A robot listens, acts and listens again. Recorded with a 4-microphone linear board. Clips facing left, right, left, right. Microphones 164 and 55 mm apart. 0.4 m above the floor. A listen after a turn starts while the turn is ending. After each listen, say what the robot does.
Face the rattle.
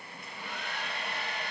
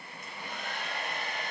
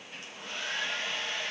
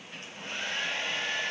Keep listening.
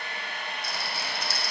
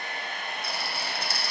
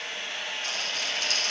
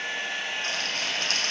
Turn 55° right.
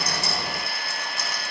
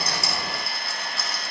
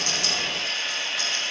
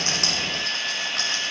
Turn 70° right.
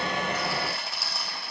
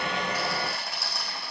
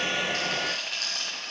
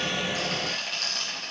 Facing the rattle.